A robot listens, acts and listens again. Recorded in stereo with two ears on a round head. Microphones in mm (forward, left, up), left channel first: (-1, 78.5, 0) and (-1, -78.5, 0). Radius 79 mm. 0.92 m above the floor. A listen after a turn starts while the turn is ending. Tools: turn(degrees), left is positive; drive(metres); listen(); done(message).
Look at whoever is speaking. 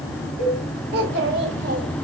turn(degrees=-65)
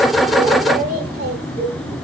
turn(degrees=-60)
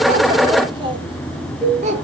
turn(degrees=-45)
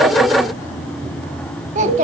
turn(degrees=-45)
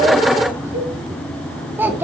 turn(degrees=-10)
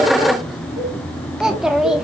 done("Found it: a child speaking, straight ahead.")